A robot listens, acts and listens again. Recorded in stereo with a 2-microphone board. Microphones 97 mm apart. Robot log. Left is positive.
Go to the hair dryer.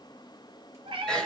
cmd idle
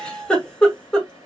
cmd idle
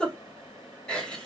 end: I can't make out a hair dryer to turn to.